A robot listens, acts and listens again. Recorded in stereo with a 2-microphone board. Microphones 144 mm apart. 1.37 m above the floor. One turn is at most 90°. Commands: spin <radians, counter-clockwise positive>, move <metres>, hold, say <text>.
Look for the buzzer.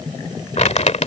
hold
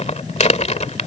hold
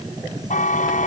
spin 1.13
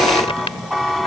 say Facing the buzzer.